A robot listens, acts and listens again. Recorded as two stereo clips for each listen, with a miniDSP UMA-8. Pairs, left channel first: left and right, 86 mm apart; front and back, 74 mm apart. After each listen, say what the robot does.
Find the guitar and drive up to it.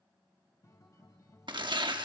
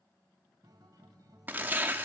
Turn 140° left.
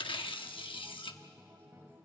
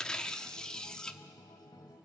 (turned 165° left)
Turn 25° right.
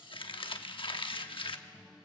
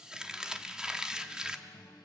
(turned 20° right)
Drive 1.0 m forward.
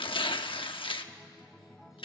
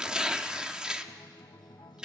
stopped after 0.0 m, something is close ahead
Something is in my way. I am facing the guitar but have not reached it.